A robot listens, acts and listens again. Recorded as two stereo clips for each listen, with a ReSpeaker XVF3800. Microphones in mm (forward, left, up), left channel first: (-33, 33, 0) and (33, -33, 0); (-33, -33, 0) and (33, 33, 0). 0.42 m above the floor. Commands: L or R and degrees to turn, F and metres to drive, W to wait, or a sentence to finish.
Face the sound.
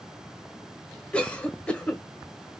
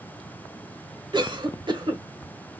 L60
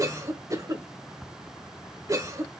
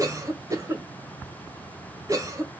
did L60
Found it: a cough, straight ahead, 1 to 2 m away.